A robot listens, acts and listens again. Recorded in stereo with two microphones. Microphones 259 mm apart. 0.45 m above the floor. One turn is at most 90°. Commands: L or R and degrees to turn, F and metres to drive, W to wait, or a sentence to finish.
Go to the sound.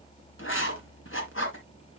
L50
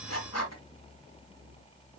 L80
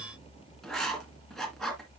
F1.0
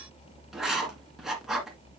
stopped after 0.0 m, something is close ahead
Something is in my way. I am facing the writing but have not reached it.